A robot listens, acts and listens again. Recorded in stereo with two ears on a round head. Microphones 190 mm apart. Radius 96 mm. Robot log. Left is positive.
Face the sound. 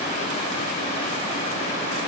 cmd idle
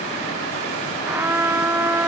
cmd yaw -30
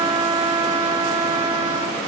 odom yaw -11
note: So it is at 155° right.
cmd yaw -155
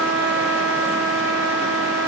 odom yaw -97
note: The trumpet is now 60° right.
cmd yaw -60
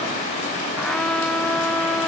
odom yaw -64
end: Found it: a trumpet, straight ahead.